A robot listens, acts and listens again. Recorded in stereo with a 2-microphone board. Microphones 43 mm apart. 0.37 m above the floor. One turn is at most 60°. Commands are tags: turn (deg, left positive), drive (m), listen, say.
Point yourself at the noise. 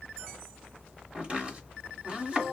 <turn deg="-35"/>
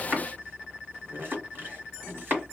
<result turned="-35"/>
<turn deg="-60"/>
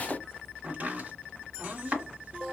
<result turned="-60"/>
<turn deg="-45"/>
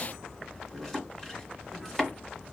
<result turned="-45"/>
<turn deg="10"/>
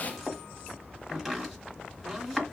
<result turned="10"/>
<say>Facing the chopping.</say>